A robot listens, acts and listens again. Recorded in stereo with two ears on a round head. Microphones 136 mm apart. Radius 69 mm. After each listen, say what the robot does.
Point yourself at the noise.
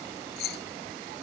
Turn 90° left.
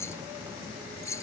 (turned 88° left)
Turn 20° left.
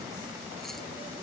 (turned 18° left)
Keep listening.
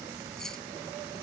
Keep listening.
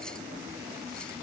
I heard keys jangling from this way, but can't make it out now.